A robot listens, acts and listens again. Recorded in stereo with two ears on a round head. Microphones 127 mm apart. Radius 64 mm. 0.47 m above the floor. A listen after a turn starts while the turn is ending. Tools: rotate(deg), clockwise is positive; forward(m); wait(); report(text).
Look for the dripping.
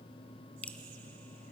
rotate(-30)
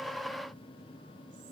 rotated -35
wait()
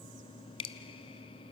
rotate(-140)
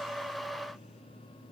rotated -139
wait()
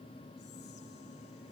report("Facing the dripping.")